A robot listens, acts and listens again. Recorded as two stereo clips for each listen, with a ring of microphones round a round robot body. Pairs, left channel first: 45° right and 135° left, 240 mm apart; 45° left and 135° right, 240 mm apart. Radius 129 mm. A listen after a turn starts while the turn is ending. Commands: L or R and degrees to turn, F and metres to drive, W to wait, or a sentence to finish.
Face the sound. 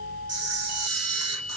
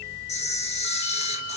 L110
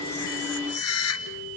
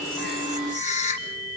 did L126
R20
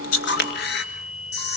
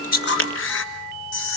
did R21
Found it: a camera shutter, straight ahead.